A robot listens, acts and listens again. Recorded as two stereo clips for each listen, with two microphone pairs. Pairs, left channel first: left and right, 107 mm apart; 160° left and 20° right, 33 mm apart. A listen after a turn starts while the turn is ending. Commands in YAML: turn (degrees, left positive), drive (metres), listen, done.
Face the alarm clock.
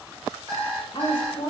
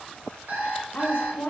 turn: -30
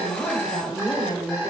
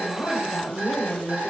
listen: true
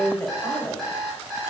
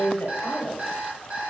done: "Found it: an alarm clock, straight ahead."